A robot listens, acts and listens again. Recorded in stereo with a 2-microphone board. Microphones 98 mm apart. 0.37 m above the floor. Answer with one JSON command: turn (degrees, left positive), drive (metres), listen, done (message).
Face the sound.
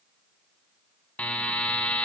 {"turn": 30}
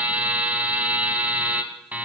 {"turn": -15}
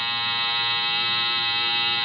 {"done": "Found it: a buzzer, straight ahead."}